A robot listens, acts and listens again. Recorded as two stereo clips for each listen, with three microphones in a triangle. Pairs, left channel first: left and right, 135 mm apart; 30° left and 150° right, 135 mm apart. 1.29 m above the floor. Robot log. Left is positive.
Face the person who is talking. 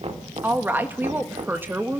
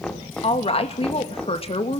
note: The woman speaking: 15° right.
cmd yaw -15
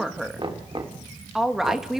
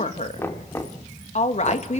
end: Found it: a woman speaking, straight ahead.